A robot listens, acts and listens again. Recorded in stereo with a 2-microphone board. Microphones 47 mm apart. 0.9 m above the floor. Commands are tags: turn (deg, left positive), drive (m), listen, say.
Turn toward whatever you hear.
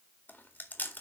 <turn deg="40"/>
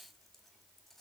<listen/>
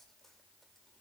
<listen/>
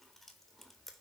<say>Found it: chewing, straight ahead.</say>